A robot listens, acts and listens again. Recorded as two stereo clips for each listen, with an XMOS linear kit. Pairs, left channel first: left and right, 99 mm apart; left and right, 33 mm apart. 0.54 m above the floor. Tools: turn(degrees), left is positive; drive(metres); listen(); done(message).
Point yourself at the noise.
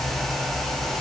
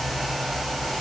listen()
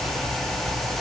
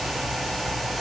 listen()
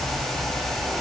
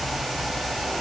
done("I can't make out anything to turn to.")